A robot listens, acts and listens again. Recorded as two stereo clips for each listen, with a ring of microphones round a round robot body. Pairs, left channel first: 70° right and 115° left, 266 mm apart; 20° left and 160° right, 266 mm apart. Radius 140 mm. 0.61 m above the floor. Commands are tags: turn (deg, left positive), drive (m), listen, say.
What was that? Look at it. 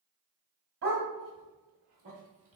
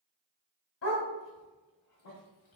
<turn deg="65"/>
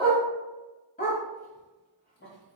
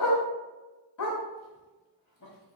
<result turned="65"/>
<turn deg="-10"/>
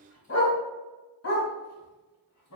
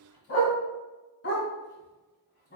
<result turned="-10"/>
<turn deg="-30"/>
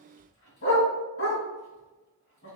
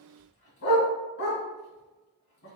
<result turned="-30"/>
<turn deg="-20"/>
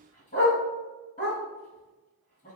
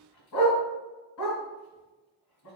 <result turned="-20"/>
<say>Facing the dog barking.</say>